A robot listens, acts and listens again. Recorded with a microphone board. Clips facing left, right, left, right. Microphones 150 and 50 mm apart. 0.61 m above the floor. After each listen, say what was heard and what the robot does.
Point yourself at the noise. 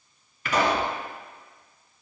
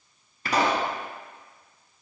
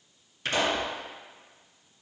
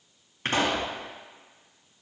The pop: about 40° right or 140° right. Turn 40° right.
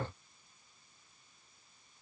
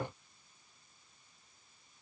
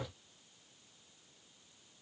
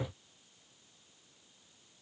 Keep listening.
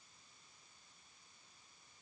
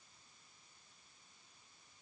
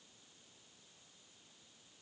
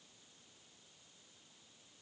I heard a pop, but can't make it out now. It was about straight ahead or 100° right.